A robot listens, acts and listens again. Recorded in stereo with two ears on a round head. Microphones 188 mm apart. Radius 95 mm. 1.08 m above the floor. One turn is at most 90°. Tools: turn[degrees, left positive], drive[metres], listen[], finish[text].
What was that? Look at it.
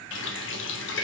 Thought: The running tap: about 60° left or 120° left.
Action: turn[60]
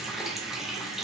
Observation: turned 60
Action: finish[Facing the running tap, under 1 m away.]